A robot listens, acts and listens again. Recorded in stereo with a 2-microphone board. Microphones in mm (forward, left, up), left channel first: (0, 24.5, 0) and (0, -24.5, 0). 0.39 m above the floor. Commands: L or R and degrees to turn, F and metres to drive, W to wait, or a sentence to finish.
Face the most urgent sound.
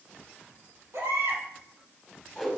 R90
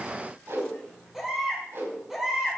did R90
Facing the baby crying, 2 to 4 m away.